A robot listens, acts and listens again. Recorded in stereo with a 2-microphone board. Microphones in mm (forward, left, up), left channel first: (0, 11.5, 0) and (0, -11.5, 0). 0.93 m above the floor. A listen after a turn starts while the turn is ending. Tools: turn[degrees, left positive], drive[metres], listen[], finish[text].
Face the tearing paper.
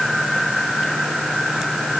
Action: listen[]
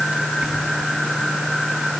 Action: listen[]
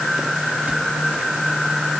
Action: finish[I can't make out tearing paper.]